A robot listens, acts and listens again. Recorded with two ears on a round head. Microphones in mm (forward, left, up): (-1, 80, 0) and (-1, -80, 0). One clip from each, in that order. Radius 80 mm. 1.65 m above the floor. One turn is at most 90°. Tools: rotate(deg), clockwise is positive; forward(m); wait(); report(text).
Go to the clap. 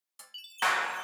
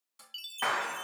rotate(-65)
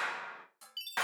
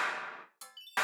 forward(1.0)
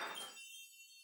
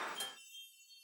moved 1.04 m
forward(1.0)
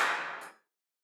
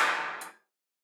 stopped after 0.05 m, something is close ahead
report("Arrived at the clap, straight ahead.")